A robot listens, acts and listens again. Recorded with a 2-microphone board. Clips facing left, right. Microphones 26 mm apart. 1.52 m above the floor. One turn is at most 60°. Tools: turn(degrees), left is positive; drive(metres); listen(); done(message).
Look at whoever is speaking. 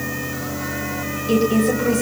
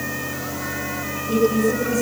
turn(degrees=60)
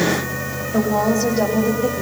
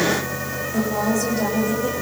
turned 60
turn(degrees=45)
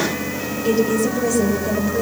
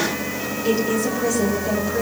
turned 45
done("Facing the woman speaking.")